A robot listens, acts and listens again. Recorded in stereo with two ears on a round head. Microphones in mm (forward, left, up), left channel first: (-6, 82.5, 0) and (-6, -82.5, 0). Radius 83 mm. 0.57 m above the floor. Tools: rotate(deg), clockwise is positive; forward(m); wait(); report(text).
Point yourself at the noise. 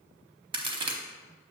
rotate(25)
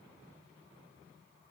wait()
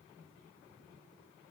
report("I heard a crack, but can't make it out now. It was about straight ahead or 130° right.")